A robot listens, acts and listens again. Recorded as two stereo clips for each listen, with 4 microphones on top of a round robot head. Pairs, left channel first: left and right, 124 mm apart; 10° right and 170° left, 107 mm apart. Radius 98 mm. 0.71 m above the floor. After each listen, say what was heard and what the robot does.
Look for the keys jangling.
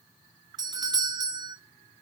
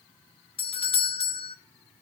Keep listening.
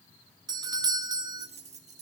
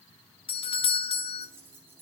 The keys jangling: 115° right. Turn 115° right.
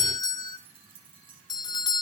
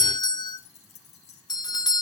The keys jangling is now 35° right. Turn 35° right.
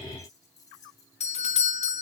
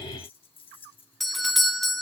The keys jangling is now 25° left. Turn 25° left.
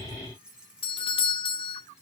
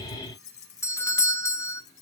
Facing the keys jangling, 2 to 4 m away.